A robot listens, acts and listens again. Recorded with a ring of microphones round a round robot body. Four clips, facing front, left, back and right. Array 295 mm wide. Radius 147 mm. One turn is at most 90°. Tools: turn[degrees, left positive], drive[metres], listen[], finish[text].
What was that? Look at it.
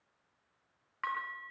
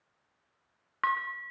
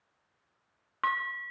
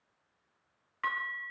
Thought: The dishes clattering: 130° left.
Action: turn[90]
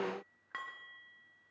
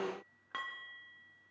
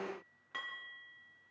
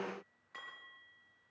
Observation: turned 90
Thought: The dishes clattering is now 70° left.
Action: turn[70]
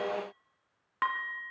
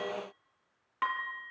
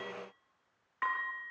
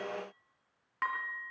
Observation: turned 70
Thought: The dishes clattering is now 10° left.
Action: turn[10]
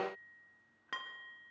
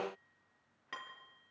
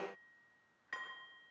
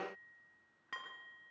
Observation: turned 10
Action: finish[Found it: dishes clattering, straight ahead, 2 to 4 m away.]